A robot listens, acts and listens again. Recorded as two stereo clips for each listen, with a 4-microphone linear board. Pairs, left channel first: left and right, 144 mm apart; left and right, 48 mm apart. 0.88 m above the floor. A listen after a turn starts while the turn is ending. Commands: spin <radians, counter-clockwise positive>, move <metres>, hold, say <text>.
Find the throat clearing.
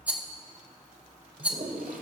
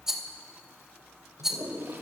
hold
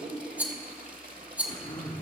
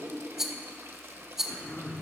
spin 1.13
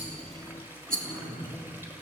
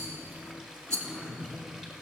say Facing the throat clearing, 2 to 4 m away.